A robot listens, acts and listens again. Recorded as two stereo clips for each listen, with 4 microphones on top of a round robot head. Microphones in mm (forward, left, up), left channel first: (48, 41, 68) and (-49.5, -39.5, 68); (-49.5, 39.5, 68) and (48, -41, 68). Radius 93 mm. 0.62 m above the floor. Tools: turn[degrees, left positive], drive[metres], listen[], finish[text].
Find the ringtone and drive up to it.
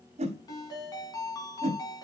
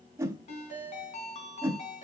Thought: The ringtone: 105° left.
Action: turn[105]
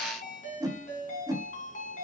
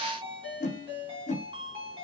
Thought: The ringtone is now 10° left.
Action: turn[10]
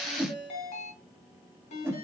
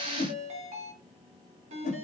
Action: drive[1.0]
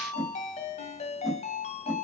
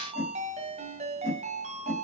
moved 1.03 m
Action: drive[1.0]
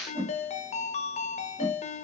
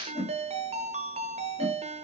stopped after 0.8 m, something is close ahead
Action: finish[Arrived at the ringtone, straight ahead.]